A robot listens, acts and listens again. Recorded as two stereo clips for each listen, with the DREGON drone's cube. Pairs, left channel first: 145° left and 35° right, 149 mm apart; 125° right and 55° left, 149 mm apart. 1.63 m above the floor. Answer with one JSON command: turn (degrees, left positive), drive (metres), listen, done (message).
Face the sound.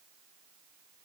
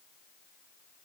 {"listen": true}
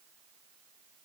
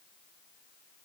{"listen": true}
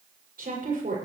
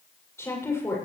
{"turn": -55}
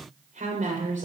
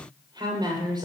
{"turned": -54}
{"done": "Found it: a woman speaking, straight ahead, over 4 m away."}